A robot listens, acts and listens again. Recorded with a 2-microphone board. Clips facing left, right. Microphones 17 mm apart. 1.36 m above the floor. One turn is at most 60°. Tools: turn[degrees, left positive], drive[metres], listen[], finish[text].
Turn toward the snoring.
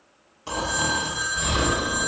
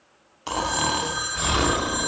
Thought: The snoring: about 40° right or 140° right.
Action: turn[-40]
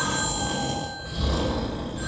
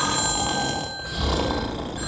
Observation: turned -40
Thought: So it is at 95° right.
Action: turn[-60]
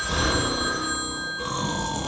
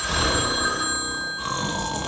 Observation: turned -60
Thought: The snoring is now 20° right.
Action: turn[-20]
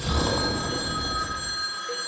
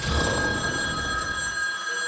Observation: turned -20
Action: finish[Found it: snoring, straight ahead.]